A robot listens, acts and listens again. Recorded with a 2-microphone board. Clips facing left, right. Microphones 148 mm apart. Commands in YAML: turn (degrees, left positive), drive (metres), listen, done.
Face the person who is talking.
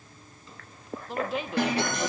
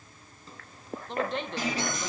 turn: 30
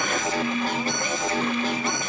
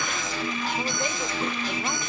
listen: true
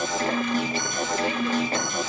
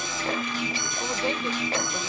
listen: true
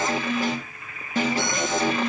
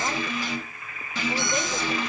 done: "I heard a woman speaking, but can't make it out now. It was about 25° right or 145° left."